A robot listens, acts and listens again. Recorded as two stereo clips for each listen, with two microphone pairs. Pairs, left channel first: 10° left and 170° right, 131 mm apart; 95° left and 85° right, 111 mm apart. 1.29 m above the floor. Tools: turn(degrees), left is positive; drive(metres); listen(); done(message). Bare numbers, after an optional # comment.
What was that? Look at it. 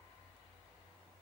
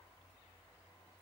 listen()
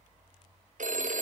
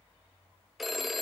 # The phone ringing: 170° right.
turn(-170)
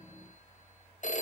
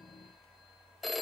done("Facing the phone ringing, under 1 m away.")